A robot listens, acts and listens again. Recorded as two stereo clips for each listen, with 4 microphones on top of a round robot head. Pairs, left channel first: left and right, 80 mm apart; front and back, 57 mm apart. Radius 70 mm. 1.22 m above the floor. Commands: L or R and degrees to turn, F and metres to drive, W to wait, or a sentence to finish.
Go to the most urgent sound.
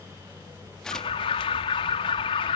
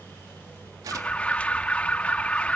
L65
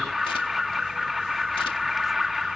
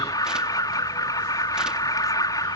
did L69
F1.0
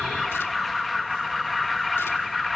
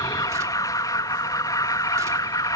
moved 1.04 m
F1.0
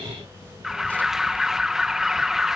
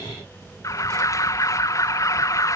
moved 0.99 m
F1.0
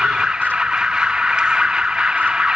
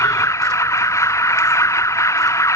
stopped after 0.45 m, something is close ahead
R10
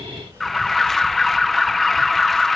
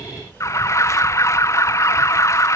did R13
I am next to the alarm.